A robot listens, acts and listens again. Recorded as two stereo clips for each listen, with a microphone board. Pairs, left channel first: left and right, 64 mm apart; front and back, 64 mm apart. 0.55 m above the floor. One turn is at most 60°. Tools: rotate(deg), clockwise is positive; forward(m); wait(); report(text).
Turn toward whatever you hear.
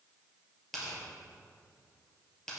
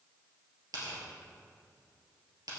rotate(-60)
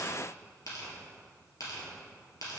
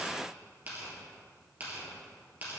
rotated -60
rotate(-60)
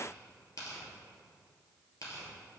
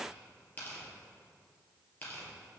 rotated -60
rotate(-60)
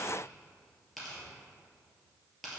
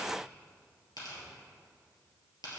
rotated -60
report("Facing the tearing paper, 2 to 4 m away.")